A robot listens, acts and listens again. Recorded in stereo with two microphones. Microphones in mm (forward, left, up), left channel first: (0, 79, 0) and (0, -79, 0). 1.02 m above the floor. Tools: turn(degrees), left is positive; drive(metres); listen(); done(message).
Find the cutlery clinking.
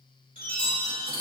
turn(degrees=-60)
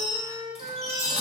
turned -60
listen()
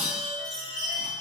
listen()
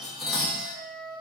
done("Facing the cutlery clinking, under 1 m away.")